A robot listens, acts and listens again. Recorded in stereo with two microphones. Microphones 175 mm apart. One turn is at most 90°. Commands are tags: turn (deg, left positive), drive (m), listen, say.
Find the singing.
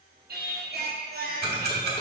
<turn deg="-65"/>
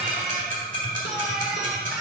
<listen/>
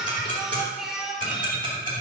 <say>Found it: singing, straight ahead, 1 to 2 m away.</say>